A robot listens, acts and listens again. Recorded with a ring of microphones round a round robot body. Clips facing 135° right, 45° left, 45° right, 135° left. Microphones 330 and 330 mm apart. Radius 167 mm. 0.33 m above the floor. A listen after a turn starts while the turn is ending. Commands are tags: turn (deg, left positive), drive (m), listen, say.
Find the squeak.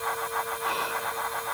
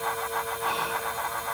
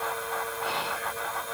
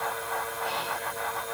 <listen/>
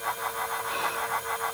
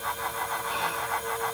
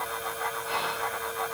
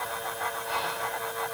<listen/>
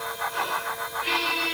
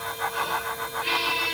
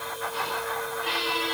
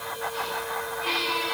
<turn deg="50"/>
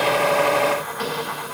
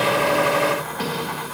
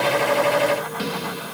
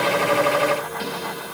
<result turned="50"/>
<turn deg="-15"/>
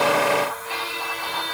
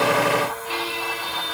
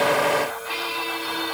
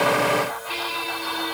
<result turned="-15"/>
<say>Found it: a squeak, straight ahead, 2 to 4 m away.</say>